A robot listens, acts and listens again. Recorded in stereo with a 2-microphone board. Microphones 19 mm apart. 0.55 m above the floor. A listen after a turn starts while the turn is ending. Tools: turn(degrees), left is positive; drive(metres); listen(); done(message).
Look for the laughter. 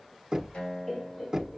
turn(degrees=15)
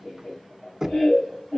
turn(degrees=40)
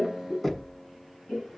turn(degrees=100)
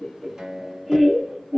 turn(degrees=-15)
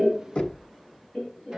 done("Found it: laughter, straight ahead.")